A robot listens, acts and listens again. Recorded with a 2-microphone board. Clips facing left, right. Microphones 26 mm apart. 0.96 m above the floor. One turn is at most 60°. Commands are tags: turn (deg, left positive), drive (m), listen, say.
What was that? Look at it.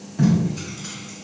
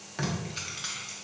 <turn deg="-50"/>
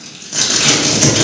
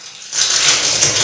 <say>Facing the tape being pulled, under 1 m away.</say>